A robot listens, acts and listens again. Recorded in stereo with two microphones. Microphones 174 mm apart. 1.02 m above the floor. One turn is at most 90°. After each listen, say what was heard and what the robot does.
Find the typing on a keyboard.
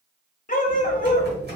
The typing on a keyboard: about 65° right or 115° right. Turn 65° right.
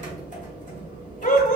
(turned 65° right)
So it is at 45° right. Turn 45° right.
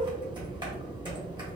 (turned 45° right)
The typing on a keyboard is now 25° right. Turn 25° right.
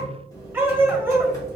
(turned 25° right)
The typing on a keyboard is now 20° left. Turn 20° left.
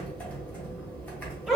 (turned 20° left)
The typing on a keyboard is now 10° left. Turn 10° left.
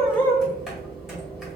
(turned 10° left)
Found it: typing on a keyboard, straight ahead, 1 to 2 m away.